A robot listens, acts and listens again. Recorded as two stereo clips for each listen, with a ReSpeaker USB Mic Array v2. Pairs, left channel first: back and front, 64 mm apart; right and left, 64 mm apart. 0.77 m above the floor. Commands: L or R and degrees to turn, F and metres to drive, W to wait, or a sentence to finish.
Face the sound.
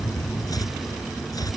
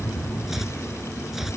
L175
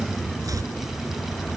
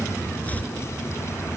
W
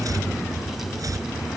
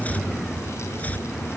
R25
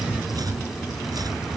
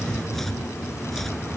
Found it: chopping, straight ahead.